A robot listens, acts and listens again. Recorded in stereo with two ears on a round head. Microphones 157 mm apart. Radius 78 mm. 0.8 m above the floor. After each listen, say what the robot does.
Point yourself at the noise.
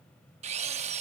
Turn 35° right.
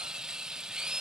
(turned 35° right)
Facing the drill.